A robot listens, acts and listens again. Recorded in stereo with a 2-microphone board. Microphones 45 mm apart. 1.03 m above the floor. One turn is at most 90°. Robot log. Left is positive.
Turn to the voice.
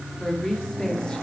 note: The woman speaking: about 20° left or 160° left.
cmd yaw +20
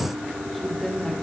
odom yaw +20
cmd yaw +30
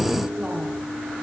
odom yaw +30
cmd idle
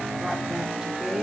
note: So it is at 10° right.
cmd yaw -10
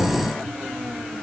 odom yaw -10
cmd idle
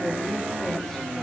cmd idle
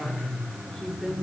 end: Facing the woman speaking.